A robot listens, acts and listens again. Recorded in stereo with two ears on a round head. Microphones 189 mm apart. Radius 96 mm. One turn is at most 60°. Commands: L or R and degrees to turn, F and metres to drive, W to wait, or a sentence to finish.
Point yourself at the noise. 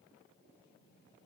W
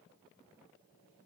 W
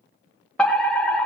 L30
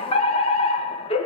L60
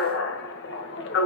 L60
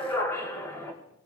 L15
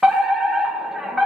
Found it: a fire alarm, straight ahead.